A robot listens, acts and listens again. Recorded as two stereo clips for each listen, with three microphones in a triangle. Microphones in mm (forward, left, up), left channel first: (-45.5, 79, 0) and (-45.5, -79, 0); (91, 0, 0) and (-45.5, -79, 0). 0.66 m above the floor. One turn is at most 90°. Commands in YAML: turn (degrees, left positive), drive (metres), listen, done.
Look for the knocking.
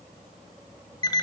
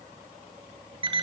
listen: true
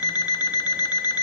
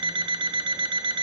listen: true
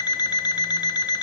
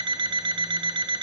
done: "I can't make out knocking to turn to."